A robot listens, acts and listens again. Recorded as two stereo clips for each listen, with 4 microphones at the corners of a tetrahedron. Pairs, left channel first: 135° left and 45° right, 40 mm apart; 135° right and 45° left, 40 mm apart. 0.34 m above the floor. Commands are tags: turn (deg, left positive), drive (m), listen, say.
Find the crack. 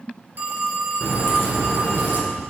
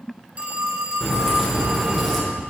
<turn deg="130"/>
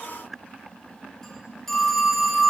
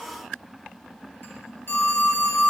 <say>I heard a crack from this way, but can't make it out now.</say>